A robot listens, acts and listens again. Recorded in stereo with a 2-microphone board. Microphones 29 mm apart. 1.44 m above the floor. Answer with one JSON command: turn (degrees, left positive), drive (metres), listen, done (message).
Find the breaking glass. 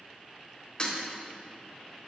{"turn": 30}
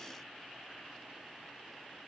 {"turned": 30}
{"listen": true}
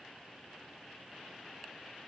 {"done": "I heard breaking glass, but can't make it out now. It was about straight ahead or 120° left."}